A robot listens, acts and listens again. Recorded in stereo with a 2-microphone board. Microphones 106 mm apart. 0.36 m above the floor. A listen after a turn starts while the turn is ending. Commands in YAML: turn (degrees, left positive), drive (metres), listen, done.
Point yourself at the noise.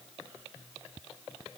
listen: true
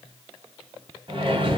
turn: -45
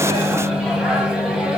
done: "Facing the microwave."